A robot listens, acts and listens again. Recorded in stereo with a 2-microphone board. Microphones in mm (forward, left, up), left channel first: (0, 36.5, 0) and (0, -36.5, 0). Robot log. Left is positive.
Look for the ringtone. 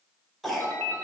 note: The ringtone: about 30° left or 150° left.
cmd yaw +30
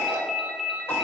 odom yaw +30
end: Facing the ringtone, 1 to 2 m away.